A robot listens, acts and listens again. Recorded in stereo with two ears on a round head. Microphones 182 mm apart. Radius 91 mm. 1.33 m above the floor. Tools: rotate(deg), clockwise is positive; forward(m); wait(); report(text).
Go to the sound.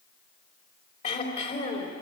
rotate(-30)
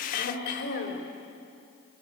rotate(-120)
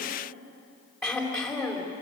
forward(1.0)
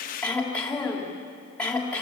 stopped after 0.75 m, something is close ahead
report("Something is in my way. I am facing the throat clearing but have not reached it.")